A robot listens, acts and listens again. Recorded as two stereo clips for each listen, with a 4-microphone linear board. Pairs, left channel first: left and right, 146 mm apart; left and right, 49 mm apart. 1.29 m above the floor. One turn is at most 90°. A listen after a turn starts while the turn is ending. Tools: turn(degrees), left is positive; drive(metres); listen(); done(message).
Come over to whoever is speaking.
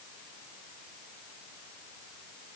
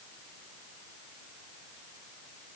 listen()
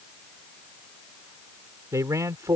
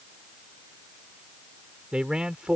turn(degrees=-25)
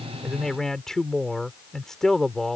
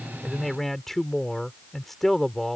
drive(metres=1.0)
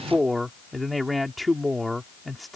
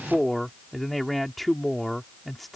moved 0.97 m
drive(metres=1.0)
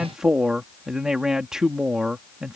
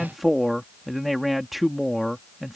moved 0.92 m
drive(metres=1.0)
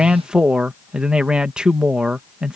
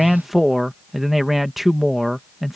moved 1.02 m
drive(metres=1.0)
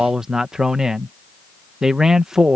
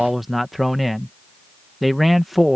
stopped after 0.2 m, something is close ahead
done("I am next to the man speaking.")